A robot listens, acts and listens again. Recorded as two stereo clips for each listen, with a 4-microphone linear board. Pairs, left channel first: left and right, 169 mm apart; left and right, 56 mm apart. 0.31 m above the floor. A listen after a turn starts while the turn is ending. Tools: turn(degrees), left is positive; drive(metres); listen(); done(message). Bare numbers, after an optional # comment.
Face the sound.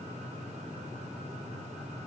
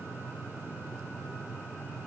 listen()
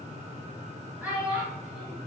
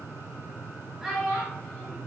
turn(-30)
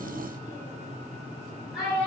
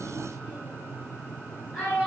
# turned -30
turn(30)
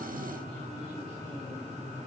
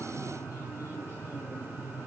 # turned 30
listen()
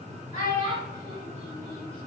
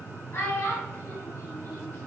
# So it is at 140° left.
turn(140)
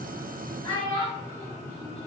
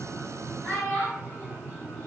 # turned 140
# The child speaking is now 30° left.
turn(30)
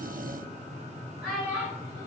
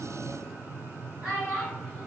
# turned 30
done("Facing the child speaking.")